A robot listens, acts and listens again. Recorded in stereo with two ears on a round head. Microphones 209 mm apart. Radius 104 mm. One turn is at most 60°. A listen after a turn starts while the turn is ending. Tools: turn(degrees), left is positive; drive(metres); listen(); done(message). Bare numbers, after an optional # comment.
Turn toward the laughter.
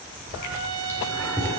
turn(30)
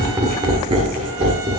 # So it is at 30° right.
turn(-30)
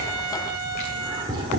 # The laughter is now 25° right.
turn(-25)
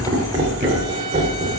# The laughter is now 35° right.
turn(-35)
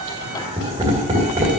# The laughter is now 15° right.
turn(-15)
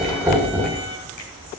done("Found it: laughter, straight ahead.")